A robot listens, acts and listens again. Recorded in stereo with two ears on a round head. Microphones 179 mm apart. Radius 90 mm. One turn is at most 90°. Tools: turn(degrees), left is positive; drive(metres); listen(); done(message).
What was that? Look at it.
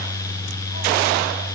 listen()
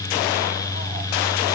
listen()
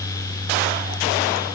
done("I can't make out anything to turn to.")